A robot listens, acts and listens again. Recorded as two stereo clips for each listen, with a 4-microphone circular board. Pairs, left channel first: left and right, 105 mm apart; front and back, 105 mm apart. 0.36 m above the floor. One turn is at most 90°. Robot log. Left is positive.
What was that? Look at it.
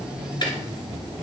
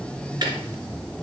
note: The ticking: 130° left.
cmd yaw +90
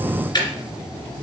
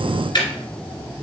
note: The ticking is now 45° left.
cmd yaw +45
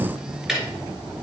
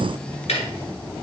end: Facing the ticking, 1 to 2 m away.